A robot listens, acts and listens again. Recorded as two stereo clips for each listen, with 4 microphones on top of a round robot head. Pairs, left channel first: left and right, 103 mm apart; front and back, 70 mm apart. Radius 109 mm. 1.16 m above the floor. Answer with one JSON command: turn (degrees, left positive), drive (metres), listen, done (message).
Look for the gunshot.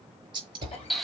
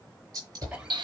{"turn": -135}
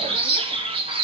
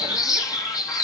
{"done": "Facing where the gunshot came from. I can't hear it now."}